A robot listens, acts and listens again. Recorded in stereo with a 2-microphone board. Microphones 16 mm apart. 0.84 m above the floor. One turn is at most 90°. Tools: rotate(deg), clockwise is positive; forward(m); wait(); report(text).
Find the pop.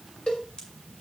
rotate(-65)
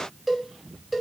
wait()
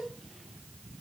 report("I heard a pop, but can't make it out now. It was about straight ahead or 50° left.")